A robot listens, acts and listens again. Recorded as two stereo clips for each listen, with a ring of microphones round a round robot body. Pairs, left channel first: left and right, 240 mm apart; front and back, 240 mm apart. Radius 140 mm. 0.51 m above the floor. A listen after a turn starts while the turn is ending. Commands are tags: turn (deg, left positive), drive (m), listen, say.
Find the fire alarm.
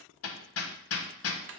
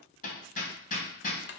<listen/>
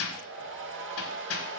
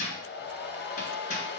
<listen/>
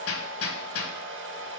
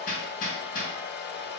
<say>I can't make out a fire alarm to turn to.</say>